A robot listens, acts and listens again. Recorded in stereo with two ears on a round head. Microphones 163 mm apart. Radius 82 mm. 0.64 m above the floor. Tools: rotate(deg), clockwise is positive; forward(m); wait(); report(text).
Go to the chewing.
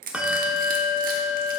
wait()
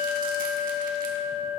wait()
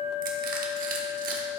report("I can't make out chewing, only crushing and a bell.")